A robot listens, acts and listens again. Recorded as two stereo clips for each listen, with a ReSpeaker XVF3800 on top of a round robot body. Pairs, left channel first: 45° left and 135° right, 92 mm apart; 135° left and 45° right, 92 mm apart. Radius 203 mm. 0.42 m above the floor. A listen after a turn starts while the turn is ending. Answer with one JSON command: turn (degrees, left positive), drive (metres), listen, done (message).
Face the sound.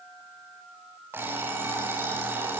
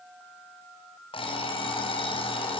{"turn": 160}
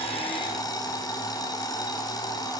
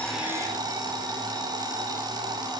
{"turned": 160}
{"done": "Found it: an alarm clock, straight ahead, 1 to 2 m away."}